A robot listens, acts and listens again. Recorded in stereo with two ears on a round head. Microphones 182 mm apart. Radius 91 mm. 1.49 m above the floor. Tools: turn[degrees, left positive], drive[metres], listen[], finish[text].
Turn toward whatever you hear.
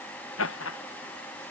Thought: The laughter: about 70° left or 110° left.
Action: turn[70]
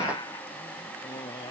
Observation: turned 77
Action: listen[]
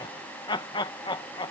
Thought: So it is at 25° left.
Action: turn[25]
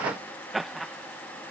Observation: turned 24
Action: finish[Found it: laughter, straight ahead.]